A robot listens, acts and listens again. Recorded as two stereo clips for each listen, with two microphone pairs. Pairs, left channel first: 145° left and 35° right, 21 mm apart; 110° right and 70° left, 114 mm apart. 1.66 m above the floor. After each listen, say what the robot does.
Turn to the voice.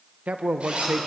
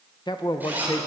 Turn 55° right.
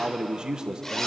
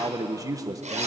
Turn 15° left.
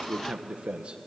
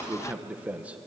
Facing the man speaking, 1 to 2 m away.